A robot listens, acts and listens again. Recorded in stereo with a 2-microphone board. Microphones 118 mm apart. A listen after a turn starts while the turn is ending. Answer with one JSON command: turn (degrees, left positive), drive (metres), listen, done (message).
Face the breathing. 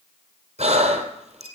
{"turn": -70}
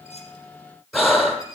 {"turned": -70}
{"done": "Facing the breathing, 2 to 4 m away."}